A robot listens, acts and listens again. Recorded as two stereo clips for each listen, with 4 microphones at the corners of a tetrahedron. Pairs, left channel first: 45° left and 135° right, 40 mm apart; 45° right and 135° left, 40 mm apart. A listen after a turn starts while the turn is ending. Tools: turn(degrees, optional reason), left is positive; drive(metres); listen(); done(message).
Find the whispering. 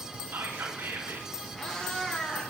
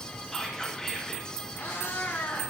turn(degrees=-130, reason="The whispering: 130° right.")
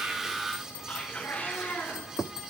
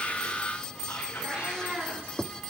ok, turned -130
turn(degrees=-20, reason="The whispering is now 20° right.")
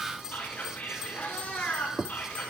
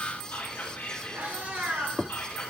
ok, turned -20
done("Facing the whispering.")